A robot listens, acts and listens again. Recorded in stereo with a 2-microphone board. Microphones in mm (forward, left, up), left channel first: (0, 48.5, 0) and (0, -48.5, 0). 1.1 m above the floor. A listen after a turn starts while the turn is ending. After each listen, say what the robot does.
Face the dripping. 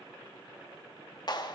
Keep listening.
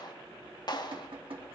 Turn 70° right.
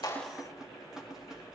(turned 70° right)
Facing the dripping.